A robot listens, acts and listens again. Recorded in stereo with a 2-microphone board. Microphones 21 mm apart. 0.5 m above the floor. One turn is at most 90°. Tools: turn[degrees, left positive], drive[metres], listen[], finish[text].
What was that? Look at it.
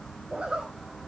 Thought: The zipper: about 65° right or 115° right.
Action: turn[-65]
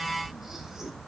Action: listen[]
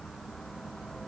Action: listen[]
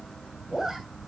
Thought: So it is at 15° right.
Action: turn[-15]
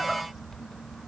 Action: listen[]
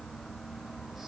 Action: listen[]
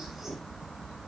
Action: finish[I heard a zipper from this way, but can't make it out now.]